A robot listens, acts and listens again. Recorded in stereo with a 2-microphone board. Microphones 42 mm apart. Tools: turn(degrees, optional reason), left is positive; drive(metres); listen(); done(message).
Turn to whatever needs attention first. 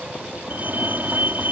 turn(degrees=-50, reason="The fire alarm: about 50° right or 130° right.")
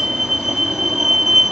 turn(degrees=-10, reason="So it is at 10° right.")
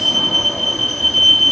done("Facing the fire alarm.")